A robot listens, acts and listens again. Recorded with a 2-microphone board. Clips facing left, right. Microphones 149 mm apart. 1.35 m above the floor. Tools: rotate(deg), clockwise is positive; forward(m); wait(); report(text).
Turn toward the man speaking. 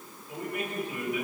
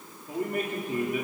rotate(50)
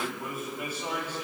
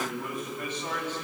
rotate(-15)
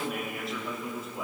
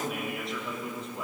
report("Found it: a man speaking, straight ahead.")